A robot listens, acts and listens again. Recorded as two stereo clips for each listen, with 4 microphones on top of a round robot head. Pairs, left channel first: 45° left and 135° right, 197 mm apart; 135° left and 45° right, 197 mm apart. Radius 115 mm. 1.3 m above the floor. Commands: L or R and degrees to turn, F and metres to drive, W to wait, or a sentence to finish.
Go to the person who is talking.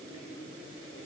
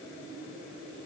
W
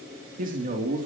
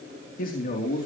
L180
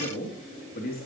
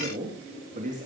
F1.0
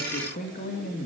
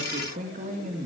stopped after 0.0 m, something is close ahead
Blocked. The man speaking is further on, straight ahead.